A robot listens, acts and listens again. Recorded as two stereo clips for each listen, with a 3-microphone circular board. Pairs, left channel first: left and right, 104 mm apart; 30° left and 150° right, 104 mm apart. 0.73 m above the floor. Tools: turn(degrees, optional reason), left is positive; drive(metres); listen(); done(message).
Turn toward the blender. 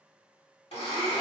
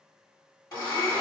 turn(degrees=80, reason="The blender: 80° left.")
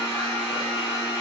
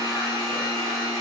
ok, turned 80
turn(degrees=-15, reason="The blender is now 15° right.")
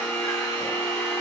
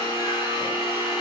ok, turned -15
done("Facing the blender, 1 to 2 m away.")